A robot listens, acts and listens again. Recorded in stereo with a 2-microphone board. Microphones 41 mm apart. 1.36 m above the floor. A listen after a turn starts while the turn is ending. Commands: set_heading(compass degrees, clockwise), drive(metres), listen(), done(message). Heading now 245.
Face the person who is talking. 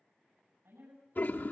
set_heading(335)
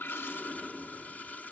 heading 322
set_heading(337)
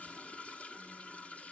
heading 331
listen()
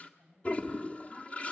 set_heading(341)
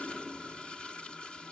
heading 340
listen()
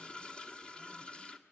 listen()
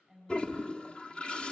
done("Facing the woman speaking.")